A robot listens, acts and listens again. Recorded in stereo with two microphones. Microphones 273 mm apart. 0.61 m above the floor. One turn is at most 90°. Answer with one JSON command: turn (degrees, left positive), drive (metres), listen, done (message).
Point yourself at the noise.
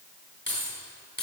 {"turn": 40}
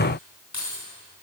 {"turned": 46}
{"turn": 90}
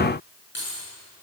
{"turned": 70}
{"turn": 45}
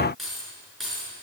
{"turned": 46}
{"done": "Found it: keys jangling, straight ahead, over 4 m away."}